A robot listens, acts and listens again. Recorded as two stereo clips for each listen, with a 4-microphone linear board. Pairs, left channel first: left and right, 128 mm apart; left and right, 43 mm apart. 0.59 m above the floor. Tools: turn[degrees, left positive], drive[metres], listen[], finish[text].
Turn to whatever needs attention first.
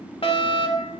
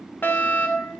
Thought: The fire alarm: about 45° left or 135° left.
Action: turn[45]
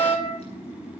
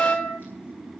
Thought: So it is at 80° left.
Action: turn[80]
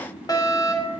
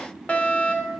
Thought: The fire alarm is now 35° left.
Action: turn[35]
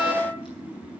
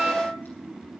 Action: finish[Facing the fire alarm, 2 to 4 m away.]